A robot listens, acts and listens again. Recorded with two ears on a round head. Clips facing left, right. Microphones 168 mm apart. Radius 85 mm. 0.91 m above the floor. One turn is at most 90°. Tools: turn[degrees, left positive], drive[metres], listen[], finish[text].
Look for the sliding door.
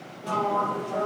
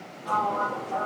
Thought: The sliding door: about 65° left or 115° left.
Action: turn[65]
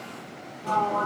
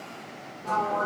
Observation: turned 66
Thought: So it is at 45° left.
Action: turn[45]
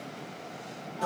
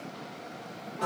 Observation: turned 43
Action: finish[Facing the sliding door, over 4 m away.]